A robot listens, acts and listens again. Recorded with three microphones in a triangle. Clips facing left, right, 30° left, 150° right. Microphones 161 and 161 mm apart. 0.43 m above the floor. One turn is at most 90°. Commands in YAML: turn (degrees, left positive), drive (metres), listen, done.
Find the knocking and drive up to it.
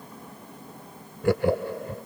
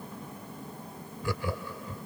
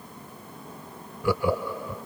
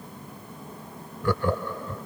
listen: true
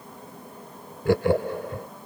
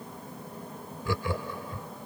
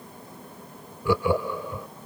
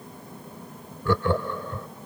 listen: true
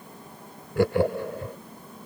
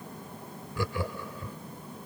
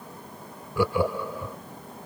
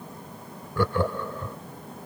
done: "I can't make out knocking to turn to."